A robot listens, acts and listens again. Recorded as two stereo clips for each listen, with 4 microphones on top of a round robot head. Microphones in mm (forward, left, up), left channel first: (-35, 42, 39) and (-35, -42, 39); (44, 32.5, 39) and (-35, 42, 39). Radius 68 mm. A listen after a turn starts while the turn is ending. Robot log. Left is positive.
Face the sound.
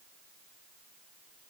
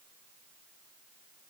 cmd idle
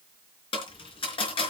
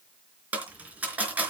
note: The dropped coin: 105° left.
cmd yaw +105
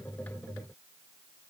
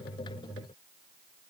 end: Facing where the dropped coin came from. I can't hear it now.